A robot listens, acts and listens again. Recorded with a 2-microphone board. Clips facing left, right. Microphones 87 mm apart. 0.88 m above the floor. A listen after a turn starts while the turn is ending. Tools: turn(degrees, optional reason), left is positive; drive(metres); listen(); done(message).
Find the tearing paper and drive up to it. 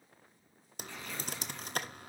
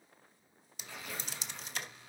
turn(degrees=-30)
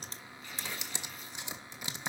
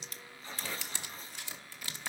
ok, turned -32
turn(degrees=-145, reason="So it is at 145° right.")
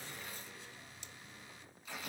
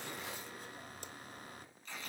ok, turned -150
drive(metres=1.0)
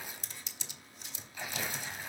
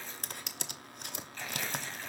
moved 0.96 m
turn(degrees=10, reason="The tearing paper is now 10° left.")
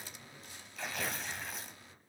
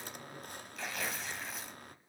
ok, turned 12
drive(metres=1.0)
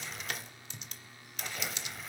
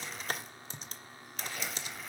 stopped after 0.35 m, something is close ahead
done("I am next to the tearing paper.")